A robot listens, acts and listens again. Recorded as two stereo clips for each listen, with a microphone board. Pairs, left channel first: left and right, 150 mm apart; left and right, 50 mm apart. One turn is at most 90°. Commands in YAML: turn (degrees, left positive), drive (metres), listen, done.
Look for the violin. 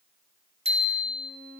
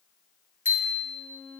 turn: -70
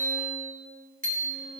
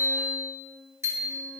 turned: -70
listen: true
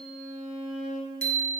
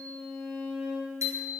done: "Facing the violin."